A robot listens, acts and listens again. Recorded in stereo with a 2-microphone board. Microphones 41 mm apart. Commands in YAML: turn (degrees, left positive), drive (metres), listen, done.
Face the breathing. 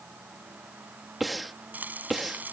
turn: 30
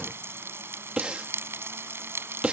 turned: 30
turn: -30
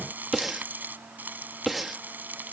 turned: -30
done: "Facing the breathing."